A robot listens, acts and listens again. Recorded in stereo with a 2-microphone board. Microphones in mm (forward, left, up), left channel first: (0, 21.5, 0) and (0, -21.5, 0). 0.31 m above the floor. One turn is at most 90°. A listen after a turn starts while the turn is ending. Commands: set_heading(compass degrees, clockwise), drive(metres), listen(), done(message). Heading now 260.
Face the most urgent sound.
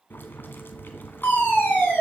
set_heading(215)
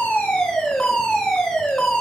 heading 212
done("Found it: a fire alarm, straight ahead.")